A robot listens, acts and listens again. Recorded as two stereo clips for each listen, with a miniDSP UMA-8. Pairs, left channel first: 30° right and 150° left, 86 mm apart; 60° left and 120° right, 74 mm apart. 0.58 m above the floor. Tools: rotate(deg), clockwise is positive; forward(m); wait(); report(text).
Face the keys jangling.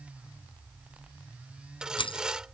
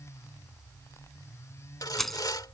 rotate(25)
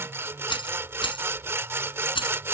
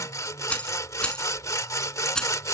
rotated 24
rotate(20)
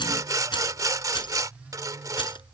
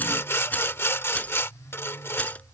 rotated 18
rotate(10)
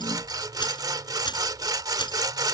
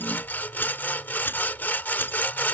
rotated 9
wait()
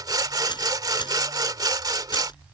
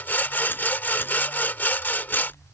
report("Found it: keys jangling, straight ahead.")